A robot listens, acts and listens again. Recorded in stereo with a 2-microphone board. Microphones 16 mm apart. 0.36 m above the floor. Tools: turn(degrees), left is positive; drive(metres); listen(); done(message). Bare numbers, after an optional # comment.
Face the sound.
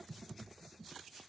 listen()
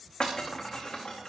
# The breaking glass: about 55° left or 125° left.
turn(55)
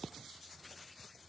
listen()
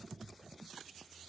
done("I heard breaking glass, but can't make it out now. It was about straight ahead or 70° left.")